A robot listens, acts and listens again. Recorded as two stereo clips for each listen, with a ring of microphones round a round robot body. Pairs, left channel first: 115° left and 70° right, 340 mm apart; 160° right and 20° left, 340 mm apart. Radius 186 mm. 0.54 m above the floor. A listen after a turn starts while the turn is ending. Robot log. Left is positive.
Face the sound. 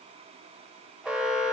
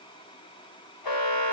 note: The alarm: 155° right.
cmd yaw -155
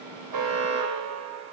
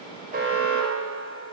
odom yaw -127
note: The alarm is now 25° right.
cmd yaw -25
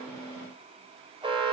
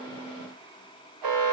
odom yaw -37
end: Facing the alarm.